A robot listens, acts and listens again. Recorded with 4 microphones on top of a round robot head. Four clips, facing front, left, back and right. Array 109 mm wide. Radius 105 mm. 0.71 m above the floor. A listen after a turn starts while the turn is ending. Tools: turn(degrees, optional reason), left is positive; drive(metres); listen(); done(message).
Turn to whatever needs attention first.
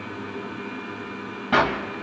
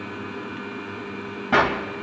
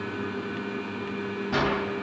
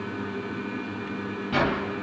listen()
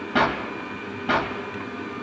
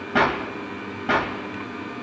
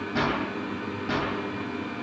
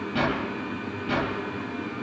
listen()
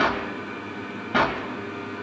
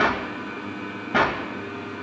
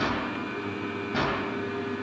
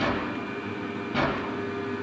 done("I can't make out anything urgent, only a clap.")